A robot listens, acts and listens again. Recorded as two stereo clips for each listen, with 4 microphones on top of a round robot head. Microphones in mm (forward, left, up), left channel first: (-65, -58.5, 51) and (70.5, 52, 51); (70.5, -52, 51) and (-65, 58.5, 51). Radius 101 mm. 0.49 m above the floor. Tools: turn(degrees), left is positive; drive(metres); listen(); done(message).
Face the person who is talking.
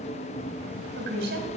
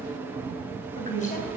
turn(degrees=10)
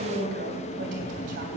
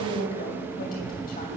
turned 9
done("Found it: a woman speaking, straight ahead, 2 to 4 m away.")